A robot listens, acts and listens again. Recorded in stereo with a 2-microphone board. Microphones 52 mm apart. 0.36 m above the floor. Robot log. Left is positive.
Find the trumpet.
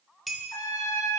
note: The trumpet: about 75° left or 105° left.
cmd yaw +75
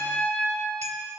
note: So it is at 30° left.
cmd yaw +30
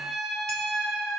end: Found it: a trumpet, straight ahead.